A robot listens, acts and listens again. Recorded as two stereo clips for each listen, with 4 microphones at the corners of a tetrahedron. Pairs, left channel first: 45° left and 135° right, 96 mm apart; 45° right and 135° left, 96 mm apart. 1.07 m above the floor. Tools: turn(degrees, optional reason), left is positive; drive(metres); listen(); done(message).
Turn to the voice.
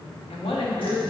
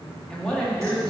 turn(degrees=35, reason="The woman speaking: 35° left.")
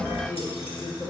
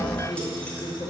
done("Facing the woman speaking, 1 to 2 m away.")